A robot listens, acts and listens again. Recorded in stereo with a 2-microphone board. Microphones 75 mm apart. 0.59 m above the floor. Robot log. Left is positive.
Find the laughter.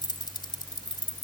cmd idle
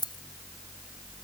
cmd idle
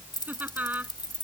note: The laughter: about 25° right or 155° right.
cmd yaw -25
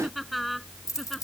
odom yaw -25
end: Found it: laughter, straight ahead.